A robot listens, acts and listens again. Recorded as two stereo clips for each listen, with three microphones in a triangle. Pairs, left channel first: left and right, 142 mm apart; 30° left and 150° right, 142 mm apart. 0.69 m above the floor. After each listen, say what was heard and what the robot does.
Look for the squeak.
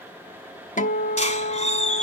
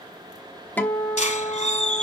The squeak: 60° left. Turn 60° left.
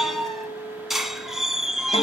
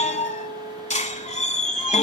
Found it: a squeak, straight ahead, 1 to 2 m away.